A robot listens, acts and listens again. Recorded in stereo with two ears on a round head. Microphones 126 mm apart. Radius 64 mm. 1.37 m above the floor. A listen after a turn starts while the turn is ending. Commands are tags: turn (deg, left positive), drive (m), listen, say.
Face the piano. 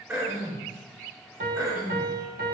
<turn deg="-70"/>
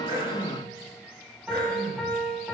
<say>Facing the piano.</say>